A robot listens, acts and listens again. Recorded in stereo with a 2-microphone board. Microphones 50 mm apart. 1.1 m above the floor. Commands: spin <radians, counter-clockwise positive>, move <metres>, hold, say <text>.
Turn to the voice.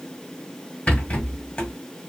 hold
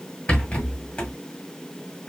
hold
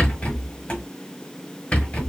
say I can't make out anyone speaking to turn to.